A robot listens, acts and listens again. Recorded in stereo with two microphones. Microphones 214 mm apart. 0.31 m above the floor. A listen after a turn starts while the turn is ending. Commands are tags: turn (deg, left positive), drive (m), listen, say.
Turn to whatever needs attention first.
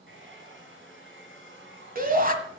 <turn deg="-40"/>
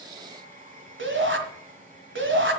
<turn deg="-90"/>
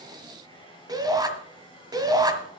<turn deg="-20"/>
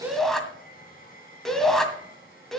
<say>Found it: a shout, straight ahead, 1 to 2 m away.</say>